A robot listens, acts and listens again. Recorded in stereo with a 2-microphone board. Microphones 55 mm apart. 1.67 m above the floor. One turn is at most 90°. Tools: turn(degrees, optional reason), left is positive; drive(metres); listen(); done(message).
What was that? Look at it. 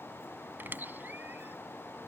turn(degrees=-35, reason="The squeak: about 35° right or 145° right.")
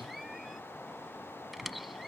done("Found it: a squeak, straight ahead.")